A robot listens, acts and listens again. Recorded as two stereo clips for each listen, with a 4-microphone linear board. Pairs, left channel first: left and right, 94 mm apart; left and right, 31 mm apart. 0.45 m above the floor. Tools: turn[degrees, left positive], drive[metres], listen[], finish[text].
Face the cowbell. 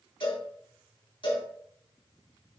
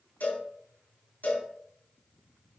Thought: The cowbell: about 65° left or 115° left.
Action: turn[65]
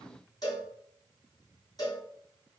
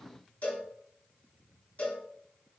Thought: So it is at 45° left.
Action: turn[45]
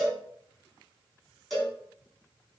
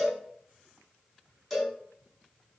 Action: finish[Found it: a cowbell, straight ahead, over 4 m away.]